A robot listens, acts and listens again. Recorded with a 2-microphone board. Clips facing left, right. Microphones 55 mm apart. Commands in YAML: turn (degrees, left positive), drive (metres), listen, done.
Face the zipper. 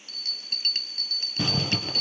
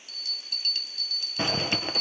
turn: -30
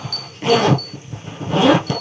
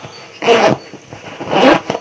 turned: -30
turn: -120
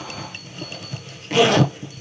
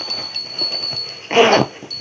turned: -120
turn: -45
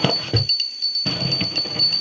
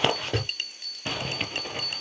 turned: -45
done: "Found it: a zipper, straight ahead, 1 to 2 m away."